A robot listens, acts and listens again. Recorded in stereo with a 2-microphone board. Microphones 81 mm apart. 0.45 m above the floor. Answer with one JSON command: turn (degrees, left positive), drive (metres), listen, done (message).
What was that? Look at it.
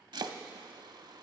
{"turn": -60}
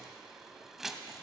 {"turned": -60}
{"done": "Facing the chopping, under 1 m away."}